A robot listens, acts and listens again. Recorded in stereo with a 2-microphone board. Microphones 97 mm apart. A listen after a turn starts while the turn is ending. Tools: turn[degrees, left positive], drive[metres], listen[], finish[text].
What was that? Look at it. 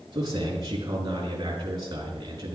Thought: The man speaking: about 40° right or 140° right.
Action: turn[-40]
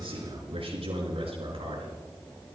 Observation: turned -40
Thought: So it is at 95° right.
Action: turn[-95]
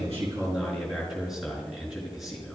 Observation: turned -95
Action: finish[Found it: a man speaking, straight ahead, over 4 m away.]